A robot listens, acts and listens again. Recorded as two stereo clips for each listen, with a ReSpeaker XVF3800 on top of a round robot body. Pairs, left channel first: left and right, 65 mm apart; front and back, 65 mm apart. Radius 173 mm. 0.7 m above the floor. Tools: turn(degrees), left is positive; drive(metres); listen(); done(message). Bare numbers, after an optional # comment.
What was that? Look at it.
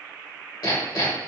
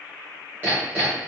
# The hammering: 110° left.
turn(110)
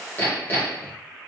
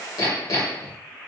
# The hammering is now 30° left.
turn(30)
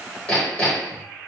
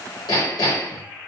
# The hammering is now 20° left.
turn(20)
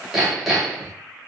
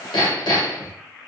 done("Found it: hammering, straight ahead, under 1 m away.")